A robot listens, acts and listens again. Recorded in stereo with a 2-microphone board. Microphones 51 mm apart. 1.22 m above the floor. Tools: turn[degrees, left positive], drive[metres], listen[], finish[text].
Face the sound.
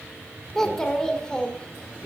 Thought: The child speaking: about 20° left or 160° left.
Action: turn[20]
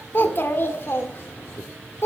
Thought: So it is at 120° left.
Action: turn[120]
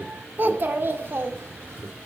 Thought: The child speaking is now 50° right.
Action: turn[-50]
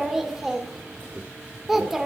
Action: finish[Facing the child speaking, 1 to 2 m away.]